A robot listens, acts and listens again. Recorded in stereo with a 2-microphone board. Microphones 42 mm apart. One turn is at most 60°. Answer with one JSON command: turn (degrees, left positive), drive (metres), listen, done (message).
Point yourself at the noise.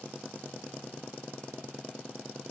{"listen": true}
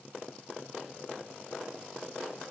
{"listen": true}
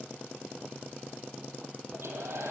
{"turn": -60}
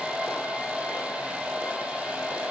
{"turn": -30}
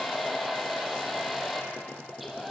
{"done": "Found it: a hair dryer, straight ahead."}